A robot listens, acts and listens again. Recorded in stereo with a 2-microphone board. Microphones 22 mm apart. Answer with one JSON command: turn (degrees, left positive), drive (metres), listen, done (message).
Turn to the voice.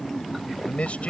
{"turn": 90}
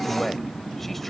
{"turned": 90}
{"done": "Facing the man speaking."}